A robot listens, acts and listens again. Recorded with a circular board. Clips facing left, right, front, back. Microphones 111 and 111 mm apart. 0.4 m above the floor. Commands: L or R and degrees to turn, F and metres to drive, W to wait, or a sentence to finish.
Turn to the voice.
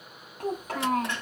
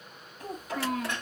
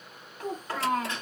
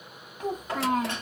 L110
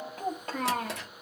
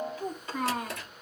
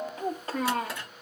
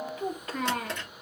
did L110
L60
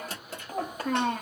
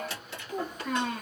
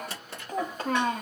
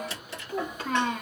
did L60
L55
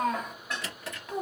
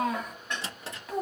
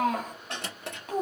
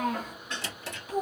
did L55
Facing the child speaking.